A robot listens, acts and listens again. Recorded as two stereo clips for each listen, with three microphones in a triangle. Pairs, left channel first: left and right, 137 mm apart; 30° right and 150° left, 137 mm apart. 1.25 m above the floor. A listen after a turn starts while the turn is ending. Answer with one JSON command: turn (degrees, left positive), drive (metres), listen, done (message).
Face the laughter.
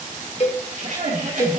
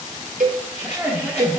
{"turn": -130}
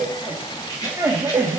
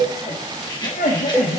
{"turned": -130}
{"turn": -15}
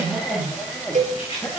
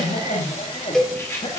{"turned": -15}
{"turn": 15}
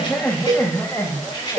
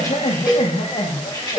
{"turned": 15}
{"turn": 20}
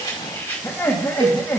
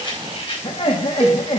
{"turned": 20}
{"turn": 15}
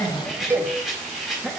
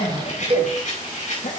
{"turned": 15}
{"done": "Facing the laughter, 1 to 2 m away."}